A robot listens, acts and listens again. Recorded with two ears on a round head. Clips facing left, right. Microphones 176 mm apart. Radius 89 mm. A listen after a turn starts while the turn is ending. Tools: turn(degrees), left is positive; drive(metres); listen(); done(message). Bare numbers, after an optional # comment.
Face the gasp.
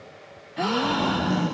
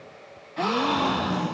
turn(30)
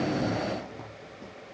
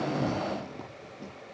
listen()
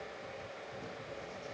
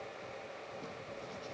done("I heard a gasp, but can't make it out now. It was about 30° right or 150° left.")